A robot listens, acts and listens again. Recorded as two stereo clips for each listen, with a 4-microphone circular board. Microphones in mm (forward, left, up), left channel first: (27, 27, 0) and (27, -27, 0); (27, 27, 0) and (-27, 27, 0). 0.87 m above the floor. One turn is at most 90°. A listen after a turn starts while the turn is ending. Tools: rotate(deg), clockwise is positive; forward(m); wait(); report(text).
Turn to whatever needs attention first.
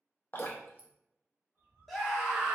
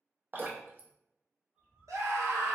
rotate(-90)
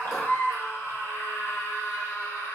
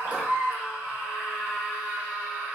rotate(-90)
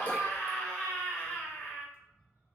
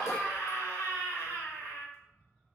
rotate(-20)
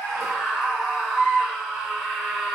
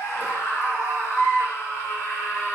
report("Facing the scream, 1 to 2 m away.")